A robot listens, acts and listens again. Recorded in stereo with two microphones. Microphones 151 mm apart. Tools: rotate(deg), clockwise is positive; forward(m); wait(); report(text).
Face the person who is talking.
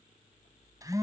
wait()
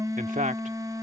rotate(60)
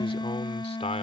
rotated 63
rotate(-45)
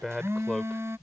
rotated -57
report("Facing the man speaking.")